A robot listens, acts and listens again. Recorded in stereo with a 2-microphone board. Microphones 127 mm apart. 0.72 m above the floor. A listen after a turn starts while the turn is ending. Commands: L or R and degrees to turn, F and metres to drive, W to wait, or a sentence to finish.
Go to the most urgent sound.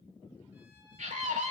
R75
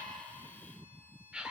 R10
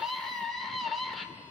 F1.0
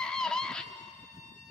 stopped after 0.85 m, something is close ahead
Arrived at the scream, straight ahead.